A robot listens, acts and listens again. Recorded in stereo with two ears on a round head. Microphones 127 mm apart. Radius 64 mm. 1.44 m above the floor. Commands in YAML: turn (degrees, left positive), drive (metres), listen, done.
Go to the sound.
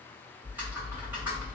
turn: -30
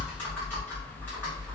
turn: 15
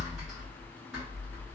drive: 1.0
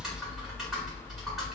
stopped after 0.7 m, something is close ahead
done: "Arrived at the typing on a keyboard, straight ahead."